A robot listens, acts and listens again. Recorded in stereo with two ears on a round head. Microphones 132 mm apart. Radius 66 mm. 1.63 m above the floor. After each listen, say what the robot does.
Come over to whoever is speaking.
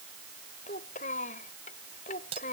Turn 55° left.
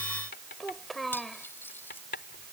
Drive 1.0 m forward.
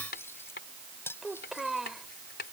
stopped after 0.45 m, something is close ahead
Blocked. The child speaking is further on, straight ahead.